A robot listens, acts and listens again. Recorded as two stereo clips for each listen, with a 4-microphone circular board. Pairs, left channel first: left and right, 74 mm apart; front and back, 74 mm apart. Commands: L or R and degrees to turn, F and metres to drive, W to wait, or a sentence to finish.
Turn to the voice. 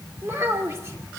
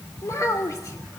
R40
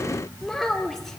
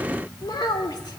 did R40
Found it: a child speaking, straight ahead, 2 to 4 m away.